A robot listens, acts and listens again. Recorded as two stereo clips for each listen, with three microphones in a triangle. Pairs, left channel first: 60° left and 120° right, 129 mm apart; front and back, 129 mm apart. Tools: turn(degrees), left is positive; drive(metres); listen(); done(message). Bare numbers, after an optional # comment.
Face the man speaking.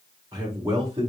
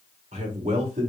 # The man speaking: 165° right.
turn(-165)
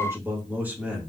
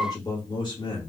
# The man speaking is now 40° right.
turn(-40)
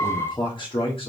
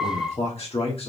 # The man speaking is now 25° left.
turn(25)
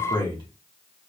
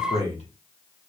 # The man speaking is now 15° left.
turn(15)
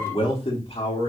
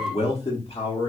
# The man speaking is now 35° left.
turn(35)
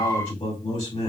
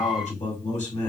# The man speaking is now 20° left.
turn(20)
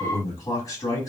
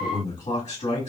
done("Found it: a man speaking, straight ahead.")